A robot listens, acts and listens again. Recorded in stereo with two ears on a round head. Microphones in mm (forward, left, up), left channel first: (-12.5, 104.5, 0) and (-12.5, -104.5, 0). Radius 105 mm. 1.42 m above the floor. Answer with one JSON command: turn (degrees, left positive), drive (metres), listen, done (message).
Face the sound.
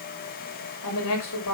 {"turn": 90}
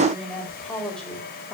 {"done": "Facing the woman speaking, over 4 m away."}